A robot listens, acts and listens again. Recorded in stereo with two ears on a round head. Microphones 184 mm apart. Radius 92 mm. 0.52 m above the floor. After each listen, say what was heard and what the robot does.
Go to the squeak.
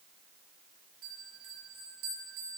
Keep listening.
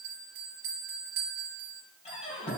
The squeak: about 30° left or 150° left. Turn 30° left.
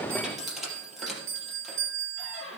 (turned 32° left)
Drive 1.0 m forward.
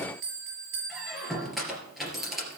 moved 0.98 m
Drive 1.0 m forward.
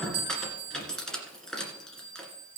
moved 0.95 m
Drive 1.0 m forward.
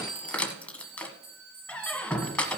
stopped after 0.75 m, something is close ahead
Arrived at the squeak, straight ahead.